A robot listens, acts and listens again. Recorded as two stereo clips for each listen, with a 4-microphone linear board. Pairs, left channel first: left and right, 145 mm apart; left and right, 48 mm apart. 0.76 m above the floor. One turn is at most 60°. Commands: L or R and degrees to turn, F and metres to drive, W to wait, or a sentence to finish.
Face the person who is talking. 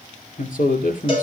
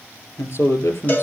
L60
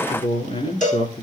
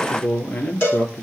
L45
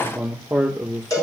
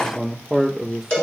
Facing the man speaking, 2 to 4 m away.